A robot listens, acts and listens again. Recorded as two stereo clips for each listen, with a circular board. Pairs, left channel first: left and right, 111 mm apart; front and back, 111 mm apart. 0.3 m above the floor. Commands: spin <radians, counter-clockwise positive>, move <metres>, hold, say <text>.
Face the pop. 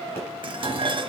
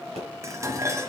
spin 2.71
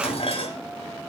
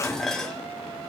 say Facing where the pop came from. I can't hear it now.